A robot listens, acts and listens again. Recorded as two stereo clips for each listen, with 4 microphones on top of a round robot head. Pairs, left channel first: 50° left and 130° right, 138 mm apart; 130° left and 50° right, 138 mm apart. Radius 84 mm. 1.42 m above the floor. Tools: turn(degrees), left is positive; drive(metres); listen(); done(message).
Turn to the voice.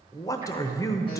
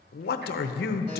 turn(degrees=120)
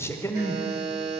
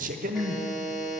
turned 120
turn(degrees=-20)
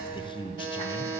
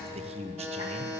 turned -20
done("Found it: a man speaking, straight ahead.")